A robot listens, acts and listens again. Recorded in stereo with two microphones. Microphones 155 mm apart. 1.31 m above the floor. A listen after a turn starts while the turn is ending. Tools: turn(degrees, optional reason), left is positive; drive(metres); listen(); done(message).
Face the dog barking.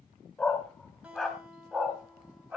turn(degrees=-30)
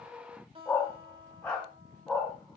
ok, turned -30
turn(degrees=30)
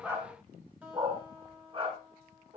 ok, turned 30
turn(degrees=-35, reason="So it is at 35° right.")
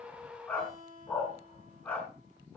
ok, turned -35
turn(degrees=10, reason="The dog barking is now 10° left.")
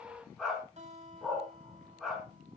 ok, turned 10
done("Facing the dog barking, 2 to 4 m away.")